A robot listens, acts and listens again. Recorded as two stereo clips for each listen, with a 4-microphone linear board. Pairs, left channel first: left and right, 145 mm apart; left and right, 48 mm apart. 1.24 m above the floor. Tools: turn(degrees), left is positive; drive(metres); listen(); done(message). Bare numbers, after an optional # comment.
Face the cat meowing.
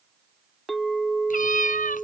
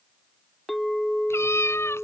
# The cat meowing: about 65° left or 115° left.
turn(65)
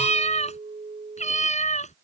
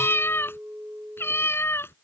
# So it is at 55° left.
turn(55)
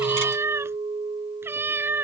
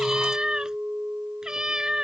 # The cat meowing is now 15° right.
turn(-15)
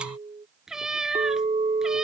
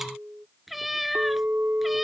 done("Found it: a cat meowing, straight ahead.")